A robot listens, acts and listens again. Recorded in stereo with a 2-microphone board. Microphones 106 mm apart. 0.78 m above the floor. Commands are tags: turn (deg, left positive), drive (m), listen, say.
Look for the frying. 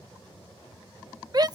<listen/>
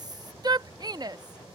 <listen/>
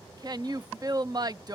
<say>I can't make out frying, only a shout.</say>